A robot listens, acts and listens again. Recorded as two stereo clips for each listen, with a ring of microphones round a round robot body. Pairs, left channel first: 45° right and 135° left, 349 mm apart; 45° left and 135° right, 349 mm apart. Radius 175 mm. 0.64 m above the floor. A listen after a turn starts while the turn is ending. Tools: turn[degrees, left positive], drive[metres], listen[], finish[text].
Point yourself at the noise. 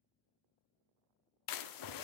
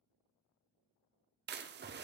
Thought: The splash: 75° right.
Action: turn[-75]
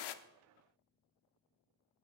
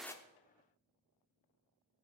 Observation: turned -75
Action: finish[I heard a splash from this way, but can't make it out now.]